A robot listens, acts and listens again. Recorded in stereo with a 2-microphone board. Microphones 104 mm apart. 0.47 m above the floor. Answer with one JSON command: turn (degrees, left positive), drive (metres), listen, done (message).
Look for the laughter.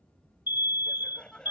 {"turn": 30}
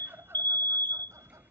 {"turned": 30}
{"turn": -25}
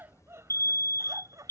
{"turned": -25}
{"turn": -35}
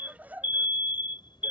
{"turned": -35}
{"turn": -15}
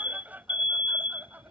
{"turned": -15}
{"turn": -15}
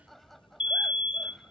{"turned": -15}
{"done": "Facing the laughter."}